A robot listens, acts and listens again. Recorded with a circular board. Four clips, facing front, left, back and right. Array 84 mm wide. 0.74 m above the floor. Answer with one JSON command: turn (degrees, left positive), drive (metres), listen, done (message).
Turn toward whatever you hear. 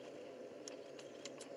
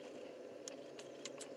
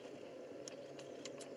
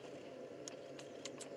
{"listen": true}
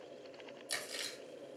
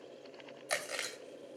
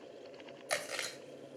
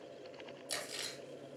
{"turn": 135}
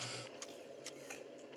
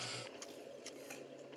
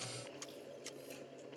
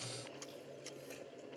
{"listen": true}
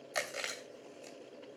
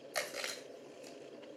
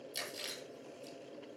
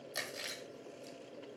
{"turn": 25}
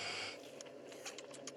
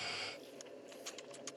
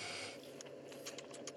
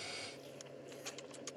{"listen": true}
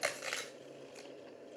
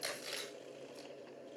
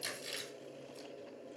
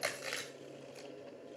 {"turn": -30}
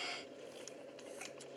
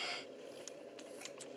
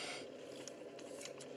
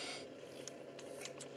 {"listen": true}
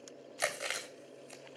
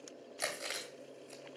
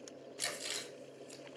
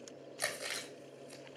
{"done": "Found it: chewing, straight ahead, 2 to 4 m away."}